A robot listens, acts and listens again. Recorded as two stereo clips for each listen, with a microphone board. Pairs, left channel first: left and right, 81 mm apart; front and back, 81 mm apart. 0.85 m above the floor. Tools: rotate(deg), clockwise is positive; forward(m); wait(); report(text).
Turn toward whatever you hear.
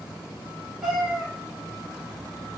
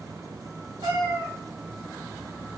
rotate(175)
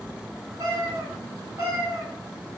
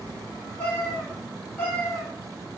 rotate(65)
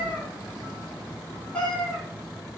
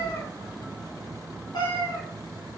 rotate(-15)
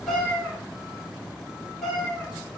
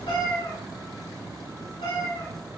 report("Found it: a cat meowing, straight ahead.")